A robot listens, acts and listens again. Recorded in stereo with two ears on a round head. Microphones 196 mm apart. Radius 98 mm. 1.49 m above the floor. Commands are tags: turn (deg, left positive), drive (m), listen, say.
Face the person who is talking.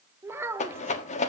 <turn deg="-30"/>
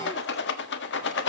<listen/>
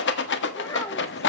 <turn deg="15"/>
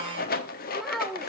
<say>Found it: a child speaking, straight ahead, 1 to 2 m away.</say>